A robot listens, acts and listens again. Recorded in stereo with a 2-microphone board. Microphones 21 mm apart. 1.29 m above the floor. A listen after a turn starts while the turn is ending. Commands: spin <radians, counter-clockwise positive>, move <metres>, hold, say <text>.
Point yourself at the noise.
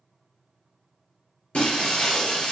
spin 0.96
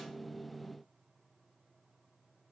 hold
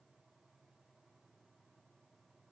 say I heard breaking glass, but can't make it out now. It was about straight ahead or 70° left.